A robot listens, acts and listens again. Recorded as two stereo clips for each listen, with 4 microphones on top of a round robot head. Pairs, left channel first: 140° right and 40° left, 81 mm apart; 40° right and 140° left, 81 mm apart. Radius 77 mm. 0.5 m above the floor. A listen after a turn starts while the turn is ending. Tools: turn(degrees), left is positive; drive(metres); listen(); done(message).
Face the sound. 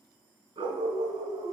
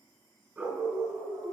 turn(degrees=85)
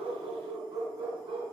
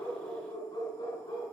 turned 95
turn(degrees=10)
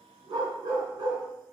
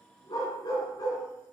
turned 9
turn(degrees=10)
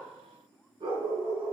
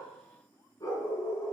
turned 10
turn(degrees=15)
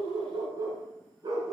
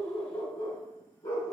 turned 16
done("Found it: a dog barking, straight ahead.")